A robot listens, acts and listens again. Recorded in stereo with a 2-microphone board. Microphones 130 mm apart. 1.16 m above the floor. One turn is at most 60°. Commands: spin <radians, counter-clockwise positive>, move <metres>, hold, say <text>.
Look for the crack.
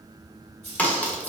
spin 0.52
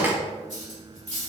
spin -0.35
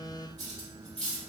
say I heard a crack from this way, but can't make it out now.